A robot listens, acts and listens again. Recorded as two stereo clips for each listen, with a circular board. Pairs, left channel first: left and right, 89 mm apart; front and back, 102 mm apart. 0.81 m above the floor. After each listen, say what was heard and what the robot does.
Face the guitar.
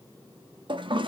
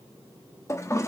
Keep listening.
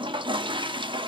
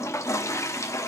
Keep listening.
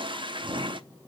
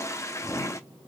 I can't make out a guitar to turn to.